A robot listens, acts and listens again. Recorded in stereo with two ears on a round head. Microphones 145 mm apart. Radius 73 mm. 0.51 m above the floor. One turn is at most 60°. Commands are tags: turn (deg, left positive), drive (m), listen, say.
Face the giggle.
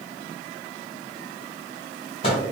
<listen/>
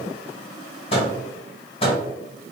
<listen/>
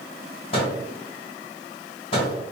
<say>I can't make out a giggle, only a microwave.</say>